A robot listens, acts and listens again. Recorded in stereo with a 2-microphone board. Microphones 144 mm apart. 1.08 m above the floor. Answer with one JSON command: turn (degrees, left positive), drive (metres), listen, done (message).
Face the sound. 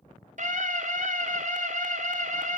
{"turn": -60}
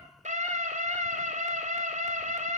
{"turn": -55}
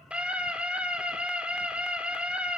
{"done": "Facing the scream."}